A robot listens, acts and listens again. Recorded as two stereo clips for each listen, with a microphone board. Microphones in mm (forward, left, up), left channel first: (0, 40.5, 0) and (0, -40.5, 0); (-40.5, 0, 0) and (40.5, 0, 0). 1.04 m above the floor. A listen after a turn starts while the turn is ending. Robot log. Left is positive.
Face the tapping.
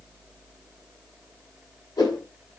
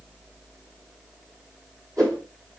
cmd idle
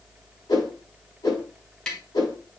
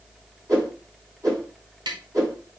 note: The tapping: 10° left.
cmd yaw +10
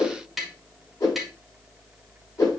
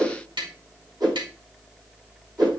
end: Facing the tapping, 2 to 4 m away.